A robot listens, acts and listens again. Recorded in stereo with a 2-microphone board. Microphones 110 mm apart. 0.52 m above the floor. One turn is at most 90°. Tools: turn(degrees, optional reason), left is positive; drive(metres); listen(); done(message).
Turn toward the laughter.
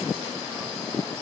listen()
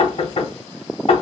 listen()
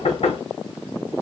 done("I can't make out laughter to turn to.")